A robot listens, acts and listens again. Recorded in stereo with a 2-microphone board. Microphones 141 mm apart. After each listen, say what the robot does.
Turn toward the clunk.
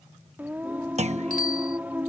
Turn 50° right.
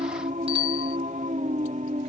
Keep listening.
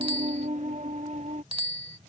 I heard a clunk, but can't make it out now. It was about straight ahead or 80° right.